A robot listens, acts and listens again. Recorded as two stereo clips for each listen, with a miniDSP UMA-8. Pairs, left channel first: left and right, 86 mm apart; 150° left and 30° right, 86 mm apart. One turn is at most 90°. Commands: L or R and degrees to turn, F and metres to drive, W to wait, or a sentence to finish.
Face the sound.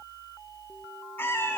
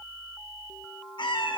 L90
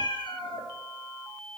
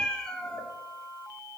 L65
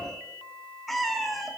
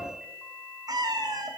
Found it: a cat meowing, straight ahead.